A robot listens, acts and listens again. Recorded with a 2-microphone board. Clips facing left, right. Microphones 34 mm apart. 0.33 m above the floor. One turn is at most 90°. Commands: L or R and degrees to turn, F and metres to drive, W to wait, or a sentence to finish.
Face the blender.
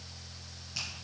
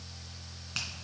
W
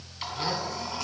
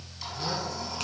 L40
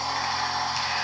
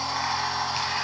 Found it: a blender, straight ahead.